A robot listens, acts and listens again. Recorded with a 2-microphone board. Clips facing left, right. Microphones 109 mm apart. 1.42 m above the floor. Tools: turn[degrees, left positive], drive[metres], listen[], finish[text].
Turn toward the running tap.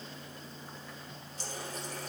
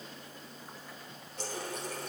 Thought: The running tap: about 60° right or 120° right.
Action: turn[-60]
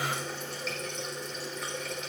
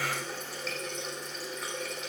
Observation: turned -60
Action: finish[Facing the running tap, 2 to 4 m away.]